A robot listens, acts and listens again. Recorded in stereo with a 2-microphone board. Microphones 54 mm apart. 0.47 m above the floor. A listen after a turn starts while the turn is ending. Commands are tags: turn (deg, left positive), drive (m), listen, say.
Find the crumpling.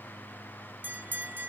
<listen/>
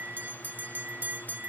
<listen/>
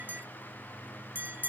<say>I can't make out crumpling, only a bell.</say>